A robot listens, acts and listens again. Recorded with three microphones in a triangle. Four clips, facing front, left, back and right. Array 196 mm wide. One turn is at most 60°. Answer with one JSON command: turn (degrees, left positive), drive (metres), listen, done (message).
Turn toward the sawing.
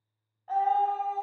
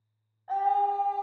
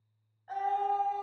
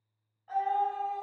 {"listen": true}
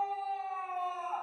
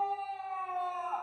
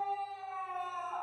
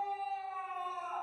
{"listen": true}
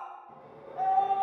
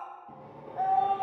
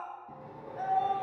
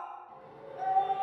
{"turn": 60}
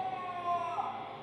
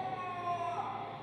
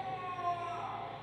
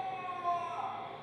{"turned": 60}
{"turn": 60}
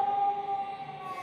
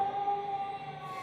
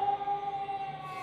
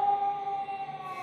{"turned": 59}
{"turn": 15}
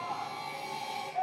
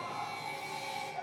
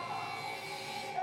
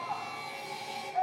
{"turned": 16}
{"done": "Facing the sawing."}